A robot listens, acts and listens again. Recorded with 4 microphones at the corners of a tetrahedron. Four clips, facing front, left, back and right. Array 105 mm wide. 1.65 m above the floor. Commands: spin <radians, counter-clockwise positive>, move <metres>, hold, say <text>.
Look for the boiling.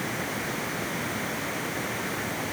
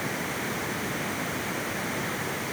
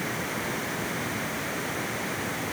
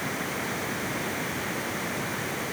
hold
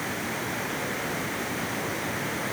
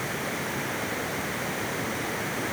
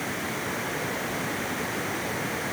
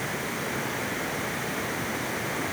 hold
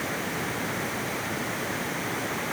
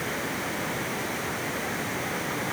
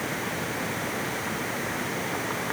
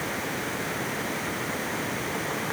say I can't make out boiling to turn to.